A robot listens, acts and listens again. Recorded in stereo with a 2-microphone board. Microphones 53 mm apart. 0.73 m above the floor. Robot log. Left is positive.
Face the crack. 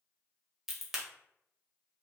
cmd yaw -30
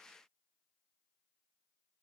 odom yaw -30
cmd idle
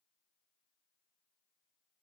end: I heard a crack, but can't make it out now. It was about 25° left or 145° right.